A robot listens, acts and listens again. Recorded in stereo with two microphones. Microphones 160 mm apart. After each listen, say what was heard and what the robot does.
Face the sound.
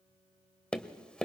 Turn 30° left.
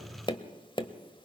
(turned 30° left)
So it is at 145° left. Turn 145° left.
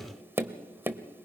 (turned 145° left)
The tapping is now 15° right. Turn 15° right.
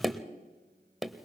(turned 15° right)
Found it: tapping, straight ahead.